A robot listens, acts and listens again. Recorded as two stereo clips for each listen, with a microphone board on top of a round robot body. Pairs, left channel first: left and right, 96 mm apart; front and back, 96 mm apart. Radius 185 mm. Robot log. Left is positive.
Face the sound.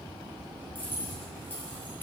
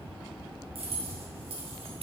note: The keys jangling: 160° left.
cmd yaw +160
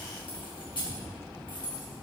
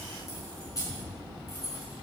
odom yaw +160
note: The keys jangling is now 55° left.
cmd yaw +55
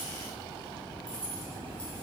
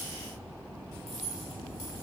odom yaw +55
note: The keys jangling is now 10° left.
cmd yaw +10
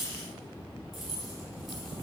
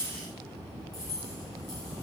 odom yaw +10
end: Facing the keys jangling, over 4 m away.